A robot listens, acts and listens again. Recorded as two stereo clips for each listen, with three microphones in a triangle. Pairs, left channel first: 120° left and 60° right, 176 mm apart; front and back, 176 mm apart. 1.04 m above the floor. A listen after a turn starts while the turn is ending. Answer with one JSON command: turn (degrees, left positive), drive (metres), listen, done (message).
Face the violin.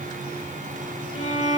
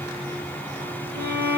{"turn": 165}
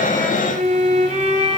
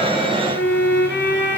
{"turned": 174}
{"turn": -10}
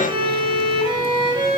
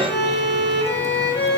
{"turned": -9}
{"done": "Facing the violin, 1 to 2 m away."}